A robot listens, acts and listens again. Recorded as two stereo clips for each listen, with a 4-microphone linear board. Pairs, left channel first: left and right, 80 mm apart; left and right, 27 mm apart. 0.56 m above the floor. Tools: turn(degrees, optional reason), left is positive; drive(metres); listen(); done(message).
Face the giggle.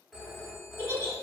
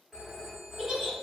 turn(degrees=-35, reason="The giggle: about 35° right or 145° right.")
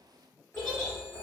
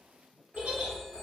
turn(degrees=-110, reason="So it is at 110° right.")
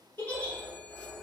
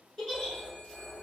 turn(degrees=20, reason="The giggle is now 20° left.")
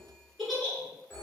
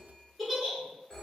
done("Facing the giggle.")